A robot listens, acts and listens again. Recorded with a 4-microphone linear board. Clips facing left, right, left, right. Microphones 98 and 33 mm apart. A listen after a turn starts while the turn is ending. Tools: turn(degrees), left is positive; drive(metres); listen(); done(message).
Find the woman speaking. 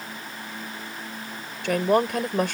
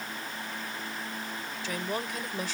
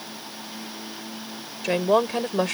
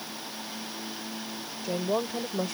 turn(degrees=60)
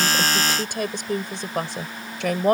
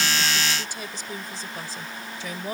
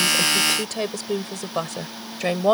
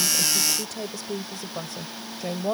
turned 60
turn(degrees=65)
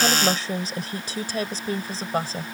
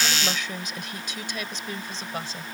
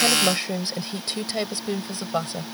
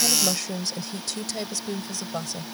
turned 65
turn(degrees=40)
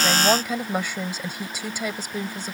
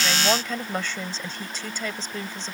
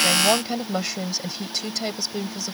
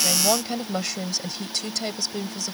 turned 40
turn(degrees=10)
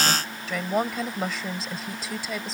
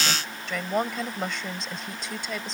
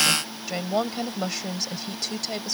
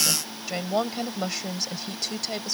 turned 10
done("Found it: a woman speaking, straight ahead.")